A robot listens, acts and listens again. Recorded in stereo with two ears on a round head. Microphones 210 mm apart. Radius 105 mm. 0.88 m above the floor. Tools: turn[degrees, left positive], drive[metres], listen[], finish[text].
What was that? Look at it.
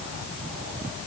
Action: listen[]
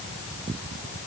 Action: listen[]
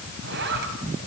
Thought: The zipper: about 45° right or 135° right.
Action: turn[-45]
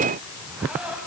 Action: finish[Found it: a zipper, straight ahead.]